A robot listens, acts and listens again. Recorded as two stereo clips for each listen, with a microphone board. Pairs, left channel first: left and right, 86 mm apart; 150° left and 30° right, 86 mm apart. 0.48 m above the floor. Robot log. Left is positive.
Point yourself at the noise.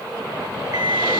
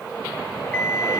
note: The alarm clock: 135° right.
cmd yaw -135
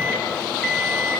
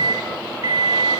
end: Found it: an alarm clock, straight ahead.